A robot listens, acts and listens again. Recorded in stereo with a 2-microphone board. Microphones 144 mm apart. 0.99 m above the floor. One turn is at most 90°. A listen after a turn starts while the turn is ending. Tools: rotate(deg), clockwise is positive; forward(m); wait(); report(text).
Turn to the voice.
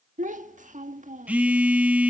rotate(60)
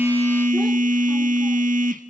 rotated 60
wait()
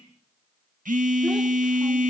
wait()
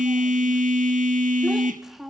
report("Facing the child speaking, 1 to 2 m away.")